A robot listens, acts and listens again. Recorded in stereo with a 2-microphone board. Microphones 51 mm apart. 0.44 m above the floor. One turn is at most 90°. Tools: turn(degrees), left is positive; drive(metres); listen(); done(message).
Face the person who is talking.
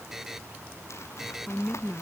turn(degrees=15)
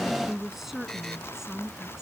turn(degrees=-30)
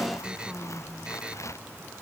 turn(degrees=10)
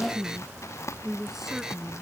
done("Found it: a woman speaking, straight ahead.")